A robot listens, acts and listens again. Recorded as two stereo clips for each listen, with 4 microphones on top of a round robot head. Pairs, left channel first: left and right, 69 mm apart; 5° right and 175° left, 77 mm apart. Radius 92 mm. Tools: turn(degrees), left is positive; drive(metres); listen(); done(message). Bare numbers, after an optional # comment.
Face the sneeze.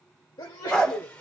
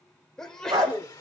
# The sneeze: 75° left.
turn(75)
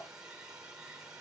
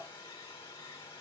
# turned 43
# Nothing new. It was at 30° left.
turn(30)
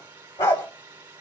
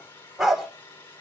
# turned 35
done("I heard a sneeze from this way, but can't make it out now.")